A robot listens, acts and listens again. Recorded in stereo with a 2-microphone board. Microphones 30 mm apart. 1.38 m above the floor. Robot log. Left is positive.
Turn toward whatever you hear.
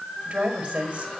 note: The woman speaking: about 30° right or 150° right.
cmd yaw -30
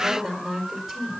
end: Facing the woman speaking, over 4 m away.